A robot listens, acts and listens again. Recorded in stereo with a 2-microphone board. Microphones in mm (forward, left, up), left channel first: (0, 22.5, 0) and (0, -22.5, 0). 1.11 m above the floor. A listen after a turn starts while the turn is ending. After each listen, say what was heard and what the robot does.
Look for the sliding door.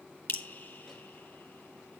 Keep listening.
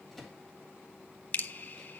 Keep listening.
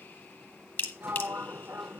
The sliding door: about 60° right or 120° right. Turn 60° right.
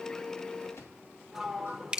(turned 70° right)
Found it: a sliding door, straight ahead.